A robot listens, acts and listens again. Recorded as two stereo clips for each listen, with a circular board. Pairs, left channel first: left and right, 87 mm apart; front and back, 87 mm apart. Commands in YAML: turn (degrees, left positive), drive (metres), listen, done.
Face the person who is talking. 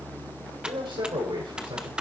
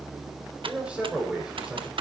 turn: -100
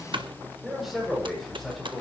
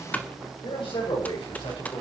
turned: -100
done: "Facing the man speaking, over 4 m away."